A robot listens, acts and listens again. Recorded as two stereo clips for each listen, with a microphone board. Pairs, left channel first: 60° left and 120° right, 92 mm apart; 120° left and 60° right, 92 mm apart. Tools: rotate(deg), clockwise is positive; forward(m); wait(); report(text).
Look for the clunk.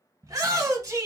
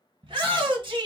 wait()
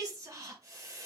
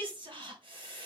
wait()
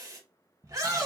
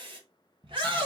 report("I can't make out a clunk to turn to.")